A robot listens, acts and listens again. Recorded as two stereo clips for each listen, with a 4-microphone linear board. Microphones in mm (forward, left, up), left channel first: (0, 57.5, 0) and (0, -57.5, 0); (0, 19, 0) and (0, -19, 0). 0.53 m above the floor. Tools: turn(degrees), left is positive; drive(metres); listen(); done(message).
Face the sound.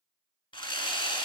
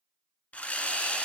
turn(degrees=45)
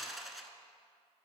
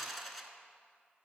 done("Found it: sawing, straight ahead, 1 to 2 m away.")